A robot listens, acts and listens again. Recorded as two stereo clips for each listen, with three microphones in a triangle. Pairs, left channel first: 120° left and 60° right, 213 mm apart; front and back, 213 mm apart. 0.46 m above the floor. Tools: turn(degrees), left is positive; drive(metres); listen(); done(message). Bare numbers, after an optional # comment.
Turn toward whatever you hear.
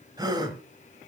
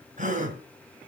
# The gasp: 130° right.
turn(-130)
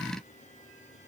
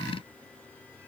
done("Facing where the gasp came from. I can't hear it now.")